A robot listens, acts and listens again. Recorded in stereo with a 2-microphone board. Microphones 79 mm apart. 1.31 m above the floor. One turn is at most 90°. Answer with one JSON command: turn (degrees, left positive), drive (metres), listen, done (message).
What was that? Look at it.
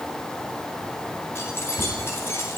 {"turn": 35}
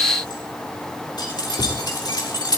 {"turn": 90}
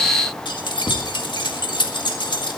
{"turn": 75}
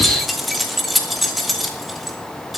{"done": "Facing the keys jangling."}